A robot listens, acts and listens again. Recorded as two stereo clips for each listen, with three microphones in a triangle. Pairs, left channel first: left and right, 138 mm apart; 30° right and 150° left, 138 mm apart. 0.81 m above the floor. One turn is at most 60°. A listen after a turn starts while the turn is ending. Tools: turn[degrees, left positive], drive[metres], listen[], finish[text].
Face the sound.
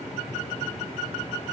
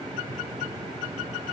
Action: listen[]
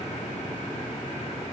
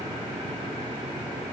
Action: listen[]
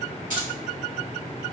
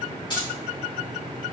Thought: The keys jangling: 85° right.
Action: turn[-60]
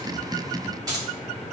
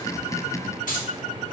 Thought: The keys jangling is now 25° right.
Action: turn[-25]
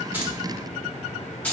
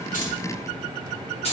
Thought: The keys jangling is now 10° left.
Action: turn[10]
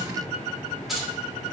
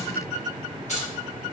Action: finish[Found it: keys jangling, straight ahead.]